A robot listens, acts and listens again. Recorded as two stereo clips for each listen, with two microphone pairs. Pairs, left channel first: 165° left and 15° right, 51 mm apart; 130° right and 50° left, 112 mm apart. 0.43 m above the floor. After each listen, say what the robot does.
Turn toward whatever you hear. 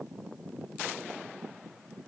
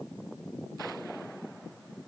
Keep listening.
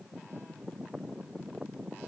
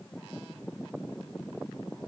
Keep listening.
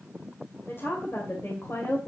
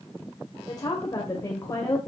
Turn 170° left.
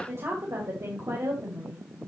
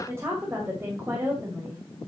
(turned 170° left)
Turn 15° right.
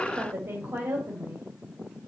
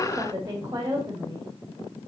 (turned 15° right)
Facing the woman speaking.